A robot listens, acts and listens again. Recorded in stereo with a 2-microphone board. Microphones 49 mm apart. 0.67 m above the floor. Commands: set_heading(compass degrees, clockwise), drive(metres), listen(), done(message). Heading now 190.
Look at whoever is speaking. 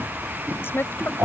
set_heading(135)
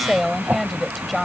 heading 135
done("Found it: a woman speaking, straight ahead.")